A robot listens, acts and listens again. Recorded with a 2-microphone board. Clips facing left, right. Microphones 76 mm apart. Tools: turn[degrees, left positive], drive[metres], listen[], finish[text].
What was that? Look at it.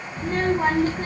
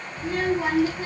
Thought: The child speaking: about 45° left or 135° left.
Action: turn[45]
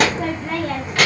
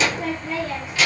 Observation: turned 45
Thought: So it is at 80° left.
Action: turn[80]
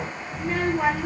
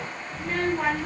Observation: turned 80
Thought: The child speaking is now 10° left.
Action: turn[10]
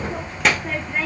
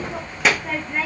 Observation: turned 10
Action: finish[Found it: a child speaking, straight ahead, under 1 m away.]